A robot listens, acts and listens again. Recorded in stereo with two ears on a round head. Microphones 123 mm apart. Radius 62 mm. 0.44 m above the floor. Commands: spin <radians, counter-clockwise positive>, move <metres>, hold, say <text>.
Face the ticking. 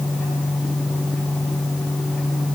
hold
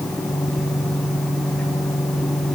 hold
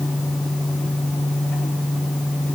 say I can't make out ticking.